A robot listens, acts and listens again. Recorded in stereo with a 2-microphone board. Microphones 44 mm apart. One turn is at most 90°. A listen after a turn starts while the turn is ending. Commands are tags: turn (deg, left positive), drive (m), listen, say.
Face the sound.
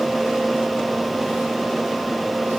<listen/>
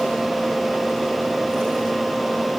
<listen/>
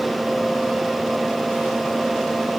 <say>I can't make out anything.</say>